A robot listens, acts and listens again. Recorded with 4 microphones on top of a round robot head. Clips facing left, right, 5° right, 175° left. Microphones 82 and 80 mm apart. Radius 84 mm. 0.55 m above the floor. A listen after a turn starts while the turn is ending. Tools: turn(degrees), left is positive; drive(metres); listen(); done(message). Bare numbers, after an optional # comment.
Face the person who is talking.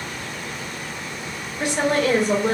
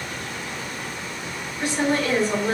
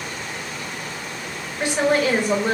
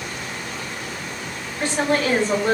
# The woman speaking: 70° left.
turn(70)
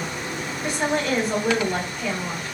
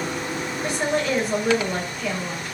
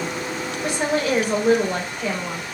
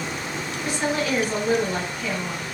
done("Facing the woman speaking, 2 to 4 m away.")